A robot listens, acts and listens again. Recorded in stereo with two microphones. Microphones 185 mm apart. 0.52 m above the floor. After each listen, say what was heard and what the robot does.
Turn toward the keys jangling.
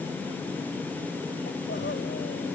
Keep listening.
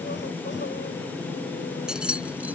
Turn 30° right.
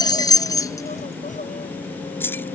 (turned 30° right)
So it is at 10° left. Turn 10° left.
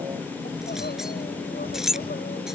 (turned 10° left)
Facing the keys jangling.